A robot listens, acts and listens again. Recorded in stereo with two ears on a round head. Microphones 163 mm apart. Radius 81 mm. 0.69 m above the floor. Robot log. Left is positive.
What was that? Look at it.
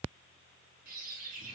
note: The bird: about 55° right or 125° right.
cmd yaw -55
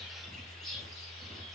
end: Found it: a bird, straight ahead, 2 to 4 m away.